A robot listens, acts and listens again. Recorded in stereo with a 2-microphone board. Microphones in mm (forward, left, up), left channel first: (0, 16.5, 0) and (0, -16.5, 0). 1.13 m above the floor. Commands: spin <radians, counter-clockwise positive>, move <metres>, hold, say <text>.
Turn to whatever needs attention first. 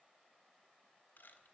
hold
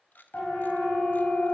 spin 1.13
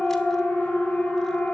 spin 0.79
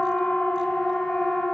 spin 0.35
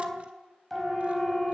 say Found it: a siren, straight ahead, over 4 m away.